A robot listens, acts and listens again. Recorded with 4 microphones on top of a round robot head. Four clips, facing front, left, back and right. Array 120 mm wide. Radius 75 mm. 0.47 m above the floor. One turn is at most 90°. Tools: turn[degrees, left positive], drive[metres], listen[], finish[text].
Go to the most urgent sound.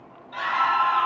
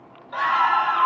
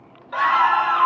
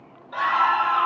Thought: The scream: straight behind.
Action: turn[90]
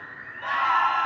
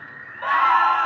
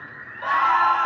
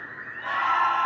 Thought: The scream is now 120° left.
Action: turn[90]
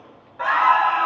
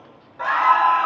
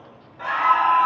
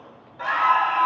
Thought: The scream is now 35° left.
Action: turn[35]
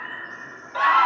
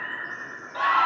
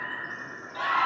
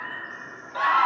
Action: drive[1.0]
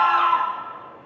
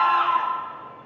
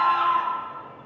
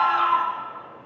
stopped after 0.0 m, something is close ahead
Action: finish[Blocked. The scream is further on, straight ahead.]